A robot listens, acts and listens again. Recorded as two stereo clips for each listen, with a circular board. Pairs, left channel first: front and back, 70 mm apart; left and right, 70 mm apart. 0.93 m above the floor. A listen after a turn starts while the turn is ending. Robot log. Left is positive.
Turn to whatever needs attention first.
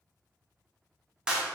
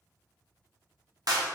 cmd idle
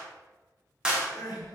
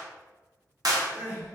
note: The crying: 25° right.
cmd yaw -25
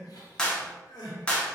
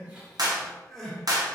end: Facing the crying.